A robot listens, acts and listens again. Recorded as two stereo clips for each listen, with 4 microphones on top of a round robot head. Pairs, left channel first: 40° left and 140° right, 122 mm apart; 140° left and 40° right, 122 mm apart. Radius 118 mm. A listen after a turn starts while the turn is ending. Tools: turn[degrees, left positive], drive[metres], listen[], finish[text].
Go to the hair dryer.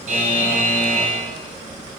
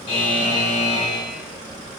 Action: listen[]
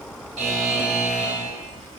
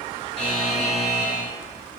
Action: listen[]
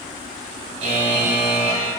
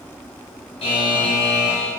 Action: finish[I can't make out a hair dryer to turn to.]